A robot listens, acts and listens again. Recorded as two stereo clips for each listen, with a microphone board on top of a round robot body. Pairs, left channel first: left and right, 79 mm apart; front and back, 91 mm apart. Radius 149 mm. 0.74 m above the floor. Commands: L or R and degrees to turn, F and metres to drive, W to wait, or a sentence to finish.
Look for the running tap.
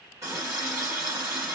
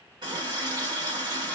R140
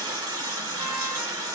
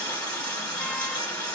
R50
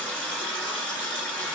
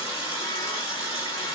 L20
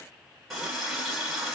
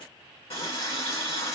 Facing the running tap, 1 to 2 m away.